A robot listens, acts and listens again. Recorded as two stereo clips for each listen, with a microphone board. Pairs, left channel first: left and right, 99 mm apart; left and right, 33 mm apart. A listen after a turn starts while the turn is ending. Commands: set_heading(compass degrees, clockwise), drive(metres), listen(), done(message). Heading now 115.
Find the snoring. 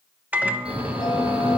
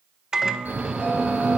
set_heading(205)
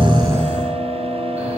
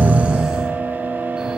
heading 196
set_heading(206)
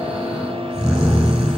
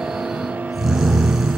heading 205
done("Facing the snoring, over 4 m away.")